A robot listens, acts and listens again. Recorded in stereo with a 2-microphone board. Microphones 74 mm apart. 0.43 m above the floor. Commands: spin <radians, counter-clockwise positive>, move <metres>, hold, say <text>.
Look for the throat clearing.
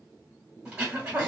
spin -0.52
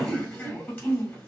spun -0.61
spin 0.35
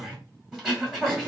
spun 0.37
say Found it: throat clearing, straight ahead, 1 to 2 m away.